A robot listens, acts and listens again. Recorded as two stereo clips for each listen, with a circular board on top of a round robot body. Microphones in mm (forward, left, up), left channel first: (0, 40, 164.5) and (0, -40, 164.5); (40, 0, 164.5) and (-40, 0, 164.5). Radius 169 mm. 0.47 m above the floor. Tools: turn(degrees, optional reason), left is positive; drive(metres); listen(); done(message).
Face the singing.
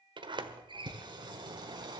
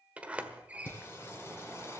turn(degrees=-55, reason="The singing: 55° right.")
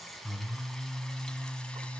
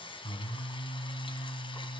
turn(degrees=10, reason="The singing is now 10° left.")
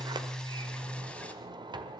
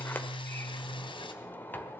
turn(degrees=15, reason="The singing is now 15° left.")
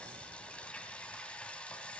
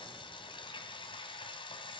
turn(degrees=15, reason="The singing is now 15° left.")
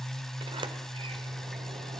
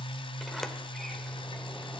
done("Facing the singing, 1 to 2 m away.")